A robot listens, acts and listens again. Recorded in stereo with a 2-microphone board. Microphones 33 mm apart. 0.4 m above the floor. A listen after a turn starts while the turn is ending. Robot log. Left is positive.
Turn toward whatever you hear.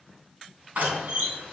note: The door slam: about 70° right or 110° right.
cmd yaw -70
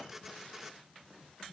cmd idle
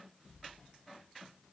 end: I heard a door slam, but can't make it out now. It was about straight ahead or 40° right.